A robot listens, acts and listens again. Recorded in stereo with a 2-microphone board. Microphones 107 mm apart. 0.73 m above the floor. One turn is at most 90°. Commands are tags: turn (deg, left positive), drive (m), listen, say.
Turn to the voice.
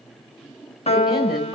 <turn deg="-30"/>
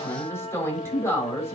<turn deg="25"/>
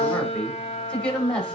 <turn deg="10"/>
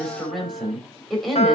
<say>Found it: a woman speaking, straight ahead, over 4 m away.</say>